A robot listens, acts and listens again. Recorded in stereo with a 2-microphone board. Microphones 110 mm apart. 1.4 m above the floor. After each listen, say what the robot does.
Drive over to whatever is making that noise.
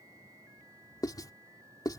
Turn 35° left.
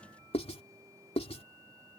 Turn 110° left.
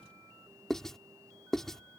Drive 1.0 m forward.
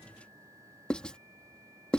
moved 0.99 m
Turn 10° left.
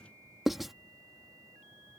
Drive 1.0 m forward.
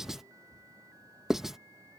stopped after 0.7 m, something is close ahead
Arrived at the writing, straight ahead.